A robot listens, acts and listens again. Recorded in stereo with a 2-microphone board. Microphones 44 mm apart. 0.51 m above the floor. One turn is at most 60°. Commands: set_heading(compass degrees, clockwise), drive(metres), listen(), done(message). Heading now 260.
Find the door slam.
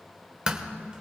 set_heading(285)
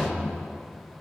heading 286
listen()
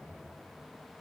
done("I heard a door slam, but can't make it out now. It was about 5° left or 130° right.")